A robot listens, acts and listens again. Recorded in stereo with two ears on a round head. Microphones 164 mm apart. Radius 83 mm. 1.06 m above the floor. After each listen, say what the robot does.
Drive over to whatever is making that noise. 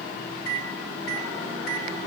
Turn 55° left.
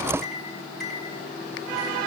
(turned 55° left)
Drive 1.0 m forward.
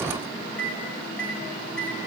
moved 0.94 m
Drive 1.0 m forward.
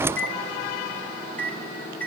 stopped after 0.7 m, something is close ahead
Turn 10° left.
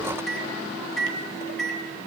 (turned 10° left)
Something is in my way. I am facing the microwave but have not reached it.